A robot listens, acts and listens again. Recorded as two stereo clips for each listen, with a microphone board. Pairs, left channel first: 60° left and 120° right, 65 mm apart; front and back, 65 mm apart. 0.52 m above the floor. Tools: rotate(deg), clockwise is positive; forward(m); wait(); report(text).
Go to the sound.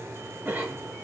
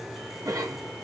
rotate(-180)
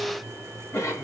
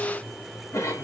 rotate(-25)
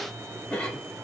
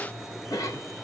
rotate(10)
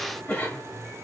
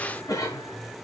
forward(1.0)
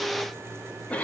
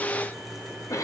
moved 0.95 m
forward(1.0)
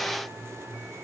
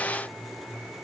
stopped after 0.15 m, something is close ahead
wait()
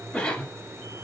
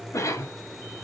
rotate(10)
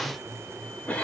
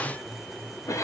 report("I am next to the cough.")